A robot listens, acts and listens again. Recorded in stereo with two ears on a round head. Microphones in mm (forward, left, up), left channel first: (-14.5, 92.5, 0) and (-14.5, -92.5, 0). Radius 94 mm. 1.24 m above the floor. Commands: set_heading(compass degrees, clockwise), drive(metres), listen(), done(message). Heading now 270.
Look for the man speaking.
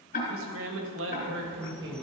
set_heading(330)
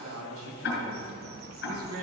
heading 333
set_heading(58)
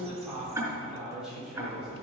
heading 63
done("Found it: a man speaking, straight ahead.")